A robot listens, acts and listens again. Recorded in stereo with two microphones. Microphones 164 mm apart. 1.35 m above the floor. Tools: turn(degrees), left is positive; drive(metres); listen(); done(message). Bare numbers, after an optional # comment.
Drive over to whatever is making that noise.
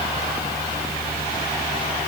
listen()
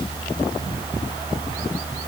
listen()
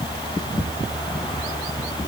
done("I can't make out anything to turn to.")